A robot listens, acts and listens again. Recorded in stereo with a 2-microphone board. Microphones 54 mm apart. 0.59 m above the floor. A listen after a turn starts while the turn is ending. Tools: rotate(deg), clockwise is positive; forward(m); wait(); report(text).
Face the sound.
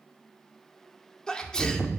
rotate(-30)
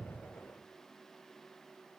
wait()
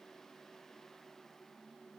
report("I heard a sneeze, but can't make it out now. It was about 20° right or 140° left.")